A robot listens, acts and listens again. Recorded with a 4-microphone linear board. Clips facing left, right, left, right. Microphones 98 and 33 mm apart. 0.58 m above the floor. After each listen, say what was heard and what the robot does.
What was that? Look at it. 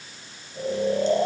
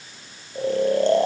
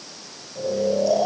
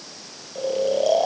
The snoring: about 65° right or 115° right. Turn 65° right.
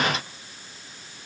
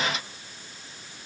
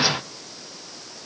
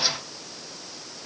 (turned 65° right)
Keep listening.
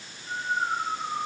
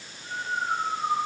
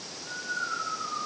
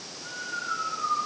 So it is at 50° right. Turn 50° right.
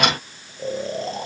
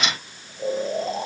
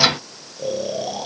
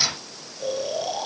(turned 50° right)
Facing the snoring.